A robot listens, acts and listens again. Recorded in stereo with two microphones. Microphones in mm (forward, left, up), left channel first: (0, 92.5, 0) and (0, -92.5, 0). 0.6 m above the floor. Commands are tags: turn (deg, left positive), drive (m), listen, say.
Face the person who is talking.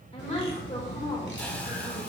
<turn deg="35"/>
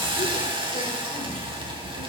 <listen/>
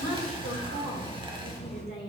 <turn deg="105"/>
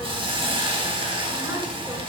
<listen/>
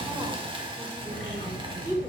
<turn deg="-20"/>
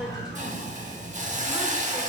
<listen/>
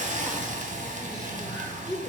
<say>Facing the woman speaking.</say>